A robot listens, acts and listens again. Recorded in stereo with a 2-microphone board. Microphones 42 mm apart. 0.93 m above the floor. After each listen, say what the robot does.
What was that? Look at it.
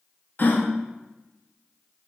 Turn 55° left.
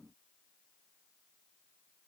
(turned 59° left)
Keep listening.
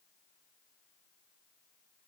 I heard a gasp, but can't make it out now. It was about 5° right or 70° left.